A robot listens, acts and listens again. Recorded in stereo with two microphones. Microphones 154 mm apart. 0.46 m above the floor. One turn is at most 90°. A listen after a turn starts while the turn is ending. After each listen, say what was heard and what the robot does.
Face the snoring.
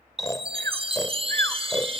The snoring: about 25° left or 155° left. Turn 25° left.
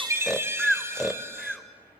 Found it: snoring, straight ahead, under 1 m away.